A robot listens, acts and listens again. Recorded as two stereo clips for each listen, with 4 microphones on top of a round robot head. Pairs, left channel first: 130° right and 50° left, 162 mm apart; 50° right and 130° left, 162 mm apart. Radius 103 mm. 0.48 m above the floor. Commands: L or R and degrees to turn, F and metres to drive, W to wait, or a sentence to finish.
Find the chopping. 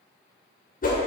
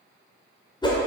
W
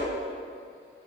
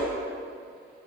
W
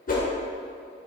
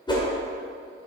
I can't make out chopping to turn to.